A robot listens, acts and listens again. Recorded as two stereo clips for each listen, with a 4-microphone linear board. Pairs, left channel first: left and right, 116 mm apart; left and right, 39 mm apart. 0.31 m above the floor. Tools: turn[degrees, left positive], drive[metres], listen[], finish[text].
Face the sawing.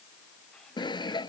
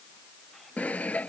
Thought: The sawing: about 40° left or 140° left.
Action: turn[40]
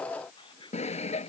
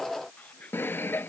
Thought: So it is at 100° left.
Action: turn[100]
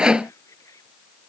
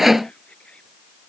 Thought: The sawing is now 10° right.
Action: turn[-10]
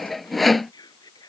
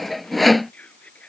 Action: finish[Facing the sawing.]